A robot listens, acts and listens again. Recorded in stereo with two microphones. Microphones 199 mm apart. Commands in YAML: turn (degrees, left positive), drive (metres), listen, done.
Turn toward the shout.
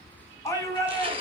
turn: 30
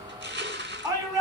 turn: -15
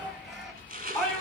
done: "Found it: a shout, straight ahead."